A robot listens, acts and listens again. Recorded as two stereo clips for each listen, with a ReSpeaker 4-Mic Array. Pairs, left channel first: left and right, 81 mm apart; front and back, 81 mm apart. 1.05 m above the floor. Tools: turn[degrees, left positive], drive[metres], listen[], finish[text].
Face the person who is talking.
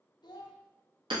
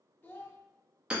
Thought: The child speaking: 65° left.
Action: turn[65]
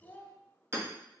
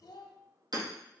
Thought: The child speaking is now 20° left.
Action: turn[20]
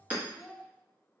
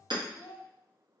Action: finish[Facing the child speaking.]